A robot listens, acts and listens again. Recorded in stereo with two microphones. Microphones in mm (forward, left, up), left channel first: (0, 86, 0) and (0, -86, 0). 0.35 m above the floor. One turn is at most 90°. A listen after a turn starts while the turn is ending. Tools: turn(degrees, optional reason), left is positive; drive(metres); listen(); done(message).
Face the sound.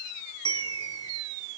turn(degrees=25, reason="The bell: about 25° left or 155° left.")
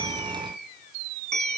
done("Found it: a bell, straight ahead.")